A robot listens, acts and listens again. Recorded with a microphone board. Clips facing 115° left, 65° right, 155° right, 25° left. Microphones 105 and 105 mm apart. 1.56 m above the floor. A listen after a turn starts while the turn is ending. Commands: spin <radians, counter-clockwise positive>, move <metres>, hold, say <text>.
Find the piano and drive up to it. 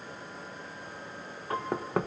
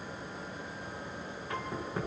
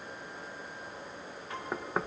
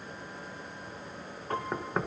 spin 1.13
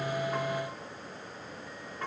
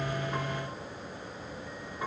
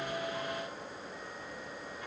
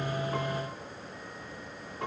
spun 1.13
spin 0.17
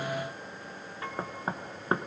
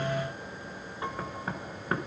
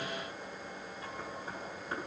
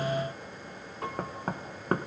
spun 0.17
move 1.0
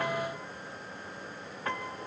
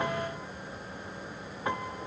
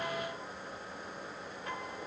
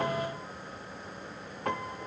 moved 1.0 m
move 1.0
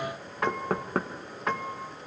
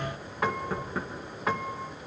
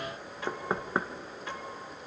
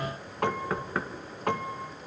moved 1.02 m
spin 0.35
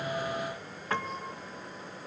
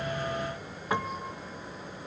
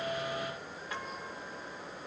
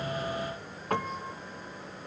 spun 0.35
move 1.0
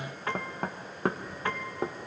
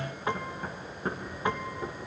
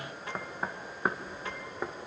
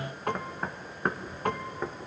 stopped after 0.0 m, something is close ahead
say I am next to the piano.